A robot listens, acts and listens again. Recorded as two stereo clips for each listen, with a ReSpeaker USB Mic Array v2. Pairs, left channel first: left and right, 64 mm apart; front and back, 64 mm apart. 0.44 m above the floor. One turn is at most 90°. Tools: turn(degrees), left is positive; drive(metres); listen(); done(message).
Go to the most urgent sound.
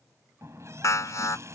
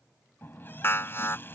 turn(degrees=55)
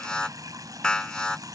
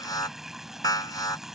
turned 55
turn(degrees=10)
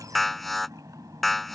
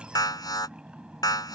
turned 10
drive(metres=1.0)
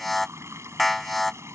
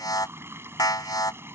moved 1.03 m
drive(metres=1.0)
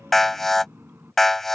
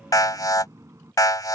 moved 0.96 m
drive(metres=1.0)
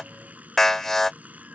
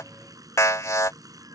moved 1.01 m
drive(metres=1.0)
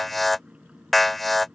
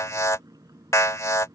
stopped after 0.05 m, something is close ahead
done("Arrived at the alarm, straight ahead.")